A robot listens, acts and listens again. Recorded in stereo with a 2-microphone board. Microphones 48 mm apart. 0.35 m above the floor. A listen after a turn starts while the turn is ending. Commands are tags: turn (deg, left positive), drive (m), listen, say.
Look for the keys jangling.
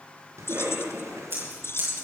<turn deg="60"/>
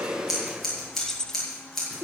<turn deg="15"/>
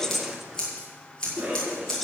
<listen/>
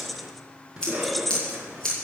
<say>Found it: keys jangling, straight ahead, 1 to 2 m away.</say>